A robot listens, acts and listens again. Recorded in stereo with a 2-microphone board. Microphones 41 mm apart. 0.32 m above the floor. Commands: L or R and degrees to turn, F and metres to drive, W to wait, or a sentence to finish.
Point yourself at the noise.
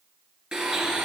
R20
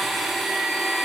Found it: a blender, straight ahead, 2 to 4 m away.